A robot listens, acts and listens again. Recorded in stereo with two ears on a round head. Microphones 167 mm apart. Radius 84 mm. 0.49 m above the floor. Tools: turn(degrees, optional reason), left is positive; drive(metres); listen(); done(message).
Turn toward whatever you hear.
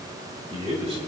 turn(degrees=-30, reason="The man speaking: about 30° right or 150° right.")
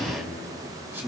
turn(degrees=-15, reason="So it is at 15° right.")
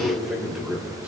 done("Facing the man speaking.")